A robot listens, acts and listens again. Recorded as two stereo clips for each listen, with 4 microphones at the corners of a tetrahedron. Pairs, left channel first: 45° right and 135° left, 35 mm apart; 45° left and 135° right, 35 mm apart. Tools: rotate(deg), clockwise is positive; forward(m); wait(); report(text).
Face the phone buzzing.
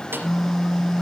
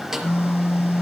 rotate(-50)
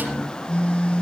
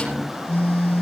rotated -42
report("Facing the phone buzzing.")